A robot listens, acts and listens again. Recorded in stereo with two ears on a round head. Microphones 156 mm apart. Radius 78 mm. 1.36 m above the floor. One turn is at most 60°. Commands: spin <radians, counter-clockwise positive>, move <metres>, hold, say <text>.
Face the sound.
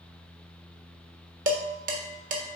spin -0.87
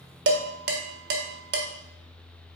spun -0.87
spin -1.05
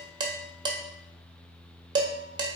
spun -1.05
spin -0.44
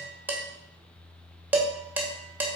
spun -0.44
spin -0.17
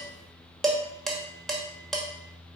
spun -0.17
say Found it: dishes clattering, straight ahead, 1 to 2 m away.